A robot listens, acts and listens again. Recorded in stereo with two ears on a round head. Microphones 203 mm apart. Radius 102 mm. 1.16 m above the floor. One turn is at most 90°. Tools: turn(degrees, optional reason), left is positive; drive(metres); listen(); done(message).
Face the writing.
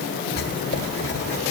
turn(degrees=45, reason="The writing: about 45° left or 135° left.")
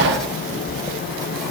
done("Facing the writing.")